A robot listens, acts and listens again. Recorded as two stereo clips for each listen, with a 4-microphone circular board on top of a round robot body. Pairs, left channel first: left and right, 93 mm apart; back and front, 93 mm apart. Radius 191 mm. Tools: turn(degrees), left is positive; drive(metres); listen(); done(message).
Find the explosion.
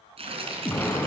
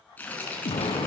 turn(degrees=160)
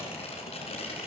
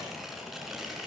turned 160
done("I heard an explosion from this way, but can't make it out now.")